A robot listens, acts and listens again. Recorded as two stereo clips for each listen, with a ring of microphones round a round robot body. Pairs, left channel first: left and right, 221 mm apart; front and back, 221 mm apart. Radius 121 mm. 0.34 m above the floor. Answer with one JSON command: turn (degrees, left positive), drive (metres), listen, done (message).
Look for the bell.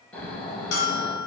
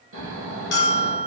{"turn": 45}
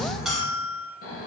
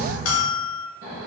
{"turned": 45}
{"done": "Facing the bell."}